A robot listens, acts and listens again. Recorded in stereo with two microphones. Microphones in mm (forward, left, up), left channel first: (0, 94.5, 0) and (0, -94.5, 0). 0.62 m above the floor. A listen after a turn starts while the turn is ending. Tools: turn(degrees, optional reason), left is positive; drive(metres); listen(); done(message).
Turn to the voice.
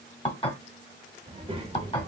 turn(degrees=-30, reason="The child speaking: about 30° right or 150° right.")
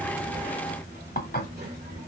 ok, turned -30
turn(degrees=-115, reason="So it is at 115° right.")
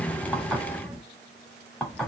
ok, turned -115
done("Found it: a child speaking, straight ahead, 1 to 2 m away.")